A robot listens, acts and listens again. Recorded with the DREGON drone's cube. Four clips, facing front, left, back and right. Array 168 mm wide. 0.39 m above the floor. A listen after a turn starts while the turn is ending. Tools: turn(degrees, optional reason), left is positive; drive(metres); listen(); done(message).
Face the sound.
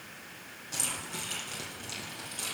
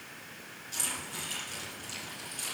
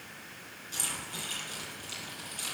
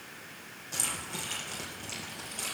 turn(degrees=-55, reason="The keys jangling: 55° right.")
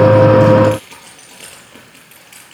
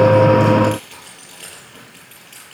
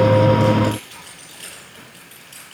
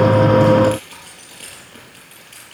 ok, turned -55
done("Facing the keys jangling.")